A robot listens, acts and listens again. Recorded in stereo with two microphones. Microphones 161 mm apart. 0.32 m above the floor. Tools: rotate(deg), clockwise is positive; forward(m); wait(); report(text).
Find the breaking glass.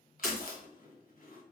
rotate(30)
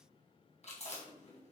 wait()
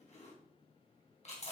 report("I heard breaking glass, but can't make it out now. It was about 25° left or 145° right.")